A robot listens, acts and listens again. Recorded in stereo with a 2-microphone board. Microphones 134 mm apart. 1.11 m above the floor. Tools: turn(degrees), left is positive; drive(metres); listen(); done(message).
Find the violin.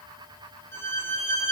turn(degrees=15)
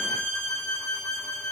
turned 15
done("Facing the violin, 2 to 4 m away.")